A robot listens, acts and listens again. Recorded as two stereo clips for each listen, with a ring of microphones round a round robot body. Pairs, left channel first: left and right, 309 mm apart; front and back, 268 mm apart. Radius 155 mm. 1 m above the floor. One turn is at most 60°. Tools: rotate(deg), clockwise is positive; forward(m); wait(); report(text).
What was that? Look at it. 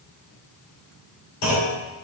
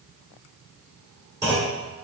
rotate(-60)
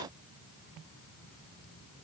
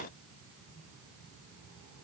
rotate(-40)
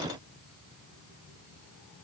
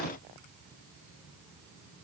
report("I heard a clunk from this way, but can't make it out now.")